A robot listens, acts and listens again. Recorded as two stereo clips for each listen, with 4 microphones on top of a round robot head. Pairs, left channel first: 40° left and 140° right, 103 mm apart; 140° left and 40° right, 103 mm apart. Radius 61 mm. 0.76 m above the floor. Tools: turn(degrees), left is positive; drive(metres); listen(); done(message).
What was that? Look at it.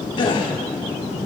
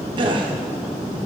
done("Facing the gasp.")